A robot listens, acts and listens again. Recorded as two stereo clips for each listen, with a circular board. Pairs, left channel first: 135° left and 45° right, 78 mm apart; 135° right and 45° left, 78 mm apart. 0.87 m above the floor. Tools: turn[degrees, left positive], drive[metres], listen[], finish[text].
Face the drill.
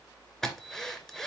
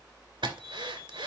Thought: The drill: 50° left.
Action: turn[50]
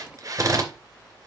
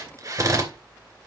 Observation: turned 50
Action: finish[Found it: a drill, straight ahead, 2 to 4 m away.]